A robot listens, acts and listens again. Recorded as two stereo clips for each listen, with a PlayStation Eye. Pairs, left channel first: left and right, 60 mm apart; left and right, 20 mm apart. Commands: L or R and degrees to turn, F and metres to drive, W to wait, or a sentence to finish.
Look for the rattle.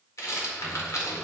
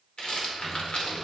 L60
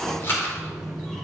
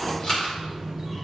L50
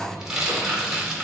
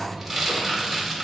R10
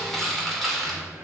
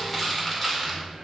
Found it: a rattle, straight ahead.